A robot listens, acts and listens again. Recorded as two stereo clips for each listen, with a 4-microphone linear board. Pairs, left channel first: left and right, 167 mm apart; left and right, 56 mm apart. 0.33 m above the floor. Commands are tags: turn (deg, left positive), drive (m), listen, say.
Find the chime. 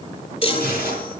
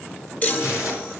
<turn deg="35"/>
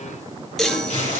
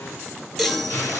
<say>Facing the chime.</say>